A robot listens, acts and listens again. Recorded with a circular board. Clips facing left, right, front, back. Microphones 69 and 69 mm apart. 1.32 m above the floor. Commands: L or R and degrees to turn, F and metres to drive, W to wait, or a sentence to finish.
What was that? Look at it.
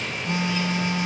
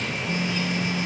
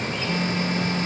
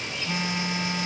L105
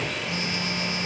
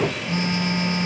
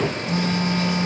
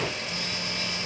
R35
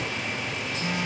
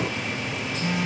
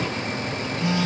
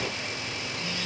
Found it: a phone buzzing, straight ahead.